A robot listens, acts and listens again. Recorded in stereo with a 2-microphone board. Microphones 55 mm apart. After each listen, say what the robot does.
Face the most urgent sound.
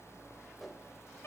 Keep listening.
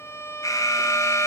Turn 90° left.
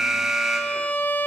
Found it: an alarm, straight ahead.